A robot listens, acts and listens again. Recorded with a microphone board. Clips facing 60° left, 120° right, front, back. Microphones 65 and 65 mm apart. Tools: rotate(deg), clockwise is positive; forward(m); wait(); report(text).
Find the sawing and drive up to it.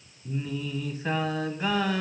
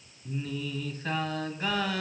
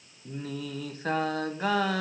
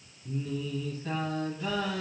wait()
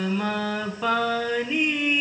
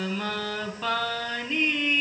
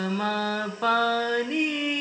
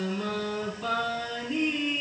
wait()
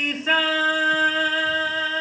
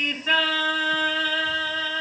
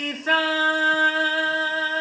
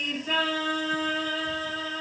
report("I can't make out sawing, only singing.")